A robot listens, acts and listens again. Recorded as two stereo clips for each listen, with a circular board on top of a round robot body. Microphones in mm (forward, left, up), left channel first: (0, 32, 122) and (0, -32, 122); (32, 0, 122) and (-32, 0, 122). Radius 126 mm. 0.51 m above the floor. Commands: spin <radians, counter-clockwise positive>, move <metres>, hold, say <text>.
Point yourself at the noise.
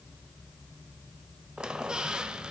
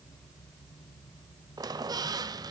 spin -2.97
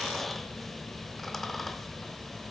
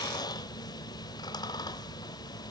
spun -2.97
say Found it: a squeak, straight ahead.